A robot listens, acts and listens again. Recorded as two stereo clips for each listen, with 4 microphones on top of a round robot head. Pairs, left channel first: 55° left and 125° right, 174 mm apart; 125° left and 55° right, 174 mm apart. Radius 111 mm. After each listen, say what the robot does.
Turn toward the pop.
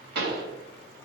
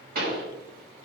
Turn 95° right.
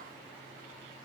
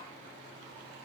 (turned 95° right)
Facing where the pop came from. I can't hear it now.